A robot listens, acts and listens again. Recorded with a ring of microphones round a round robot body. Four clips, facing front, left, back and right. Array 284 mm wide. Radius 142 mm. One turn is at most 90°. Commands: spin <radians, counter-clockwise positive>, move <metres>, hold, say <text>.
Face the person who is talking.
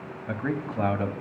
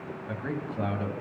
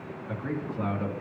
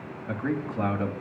spin -0.26
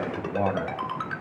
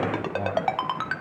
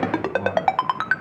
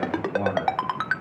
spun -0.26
say Facing the man speaking, 2 to 4 m away.